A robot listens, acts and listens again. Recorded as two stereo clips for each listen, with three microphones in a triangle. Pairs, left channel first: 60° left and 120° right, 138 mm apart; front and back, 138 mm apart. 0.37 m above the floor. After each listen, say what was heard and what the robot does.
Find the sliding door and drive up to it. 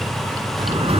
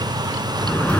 The sliding door: 80° right. Turn 80° right.
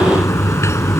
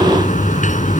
The sliding door is now 10° right. Turn 10° right.
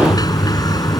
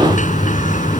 Drive 1.0 m forward.
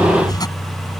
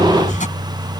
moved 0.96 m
Drive 1.0 m forward.
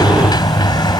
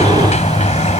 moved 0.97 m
The sliding door is now 10° left. Turn 10° left.
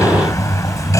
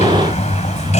Drive 1.0 m forward.
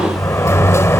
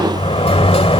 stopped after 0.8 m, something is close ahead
Arrived at the sliding door, straight ahead.